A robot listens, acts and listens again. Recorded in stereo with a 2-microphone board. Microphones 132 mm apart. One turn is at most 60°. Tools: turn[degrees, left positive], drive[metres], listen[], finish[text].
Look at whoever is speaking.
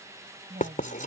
Action: turn[-60]
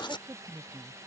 Thought: So it is at 30° right.
Action: turn[-30]
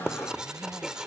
Action: listen[]
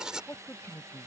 Thought: The woman speaking is now 15° left.
Action: turn[15]
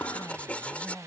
Action: finish[Found it: a woman speaking, straight ahead.]